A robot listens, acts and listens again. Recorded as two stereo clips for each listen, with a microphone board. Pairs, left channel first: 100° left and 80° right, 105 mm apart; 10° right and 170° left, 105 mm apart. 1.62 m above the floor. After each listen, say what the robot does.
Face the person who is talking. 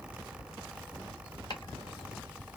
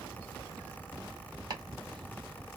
Keep listening.
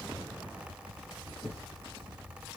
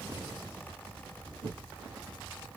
Keep listening.
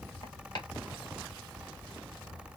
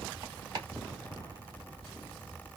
I can't make out anyone speaking to turn to.